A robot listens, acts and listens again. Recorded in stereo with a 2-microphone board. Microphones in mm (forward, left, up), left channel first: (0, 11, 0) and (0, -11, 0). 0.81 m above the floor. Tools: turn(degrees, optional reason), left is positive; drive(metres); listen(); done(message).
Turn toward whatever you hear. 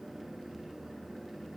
listen()
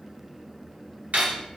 turn(degrees=-75, reason="The cutlery clinking: about 75° right or 105° right.")
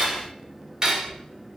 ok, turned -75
turn(degrees=-35, reason="So it is at 35° right.")
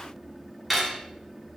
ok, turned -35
done("Facing the cutlery clinking, 1 to 2 m away.")